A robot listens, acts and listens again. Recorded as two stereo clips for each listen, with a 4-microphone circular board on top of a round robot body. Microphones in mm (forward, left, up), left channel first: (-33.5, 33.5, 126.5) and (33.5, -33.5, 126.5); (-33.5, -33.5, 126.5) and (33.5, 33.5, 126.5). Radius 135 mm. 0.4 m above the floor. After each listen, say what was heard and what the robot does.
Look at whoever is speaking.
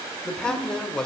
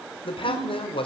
The man speaking: 145° right. Turn 145° right.
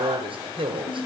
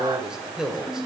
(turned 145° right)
The man speaking is now 40° right. Turn 40° right.
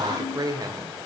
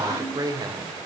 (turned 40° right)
Facing the man speaking.